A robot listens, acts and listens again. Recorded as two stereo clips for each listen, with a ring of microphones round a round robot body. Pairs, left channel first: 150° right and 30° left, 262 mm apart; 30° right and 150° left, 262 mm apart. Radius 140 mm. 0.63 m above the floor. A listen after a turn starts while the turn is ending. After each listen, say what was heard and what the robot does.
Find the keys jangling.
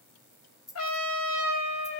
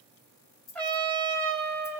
The keys jangling: 70° right. Turn 70° right.
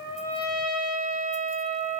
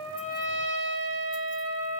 Keep listening.
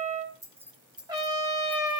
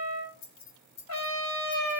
The keys jangling is now 55° right. Turn 55° right.
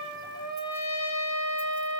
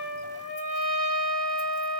Keep listening.
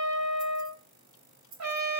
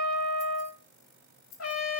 The keys jangling is now 30° right. Turn 30° right.
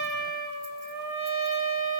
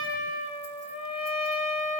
Keep listening.
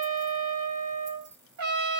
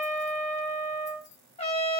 Facing the keys jangling.